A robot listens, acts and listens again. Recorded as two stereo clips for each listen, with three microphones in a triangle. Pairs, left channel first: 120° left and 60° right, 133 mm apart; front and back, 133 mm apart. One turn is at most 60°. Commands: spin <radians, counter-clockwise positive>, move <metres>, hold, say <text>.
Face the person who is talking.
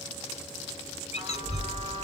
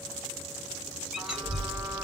spin -1.05
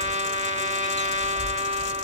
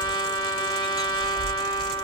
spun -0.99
spin -1.05
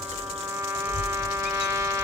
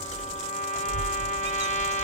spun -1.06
spin -0.52
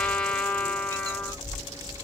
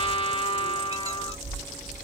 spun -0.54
say Found it: a child speaking, straight ahead.